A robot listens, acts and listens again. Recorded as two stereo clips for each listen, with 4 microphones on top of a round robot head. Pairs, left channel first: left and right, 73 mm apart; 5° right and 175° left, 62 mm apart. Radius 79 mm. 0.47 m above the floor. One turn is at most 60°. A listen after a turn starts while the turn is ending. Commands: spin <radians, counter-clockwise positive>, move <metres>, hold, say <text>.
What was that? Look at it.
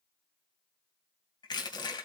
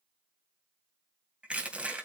spin 1.05
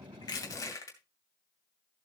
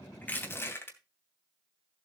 spin 0.79
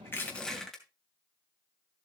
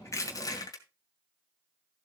say Found it: crushing, straight ahead.